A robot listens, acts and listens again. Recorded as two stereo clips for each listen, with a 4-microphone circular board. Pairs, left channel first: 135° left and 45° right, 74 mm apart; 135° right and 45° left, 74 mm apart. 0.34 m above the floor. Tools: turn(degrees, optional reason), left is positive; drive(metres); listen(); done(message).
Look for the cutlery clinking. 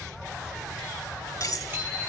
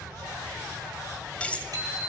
turn(degrees=155, reason="The cutlery clinking: 155° left.")
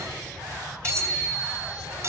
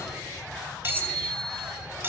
turn(degrees=-10, reason="The cutlery clinking is now 10° right.")
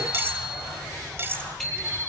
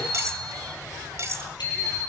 done("Found it: cutlery clinking, straight ahead, 1 to 2 m away.")